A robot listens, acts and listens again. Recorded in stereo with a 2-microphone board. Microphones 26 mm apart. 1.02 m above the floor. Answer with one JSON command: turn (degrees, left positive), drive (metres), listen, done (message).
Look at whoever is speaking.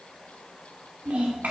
{"turn": -90}
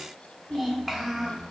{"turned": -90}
{"done": "Found it: a child speaking, straight ahead, 2 to 4 m away."}